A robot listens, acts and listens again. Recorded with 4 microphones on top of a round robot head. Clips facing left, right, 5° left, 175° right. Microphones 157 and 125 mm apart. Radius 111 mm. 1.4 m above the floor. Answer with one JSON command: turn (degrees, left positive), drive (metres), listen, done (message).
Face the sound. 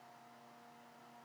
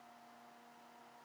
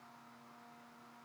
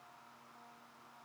{"listen": true}
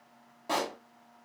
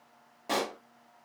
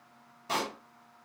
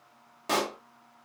{"turn": -165}
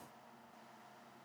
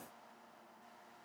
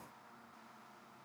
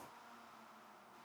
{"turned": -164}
{"done": "Facing where the pop came from. I can't hear it now."}